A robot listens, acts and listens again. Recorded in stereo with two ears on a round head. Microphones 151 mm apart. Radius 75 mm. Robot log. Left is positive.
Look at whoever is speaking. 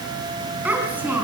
cmd yaw -30
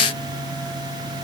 cmd idle
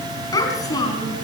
note: So it is at 20° left.
cmd yaw +20
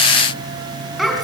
end: Found it: a child speaking, straight ahead, 2 to 4 m away.